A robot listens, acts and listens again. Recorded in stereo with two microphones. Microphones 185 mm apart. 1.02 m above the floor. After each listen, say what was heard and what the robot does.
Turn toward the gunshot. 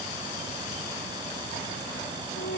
Keep listening.
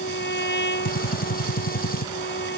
The gunshot: about 50° left or 130° left. Turn 50° left.
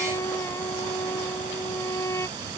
Keep listening.
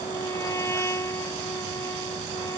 I heard a gunshot, but can't make it out now. It was about straight ahead or 80° left.